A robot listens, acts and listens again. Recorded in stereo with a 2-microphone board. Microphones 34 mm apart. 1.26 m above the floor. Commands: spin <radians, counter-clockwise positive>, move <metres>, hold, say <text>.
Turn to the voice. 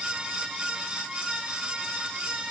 hold
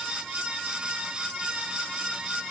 hold
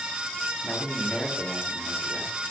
spin 0.96
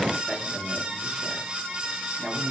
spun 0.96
spin 0.17
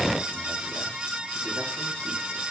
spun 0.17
hold
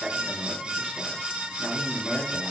say Facing the man speaking, 2 to 4 m away.